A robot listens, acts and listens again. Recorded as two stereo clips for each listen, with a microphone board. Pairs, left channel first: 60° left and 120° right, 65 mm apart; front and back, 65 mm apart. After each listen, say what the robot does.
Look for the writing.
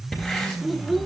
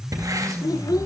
Turn 140° left.
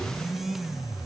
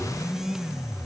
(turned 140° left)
Keep listening.
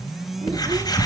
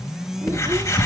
Turn 40° left.
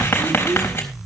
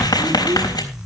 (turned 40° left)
Facing the writing.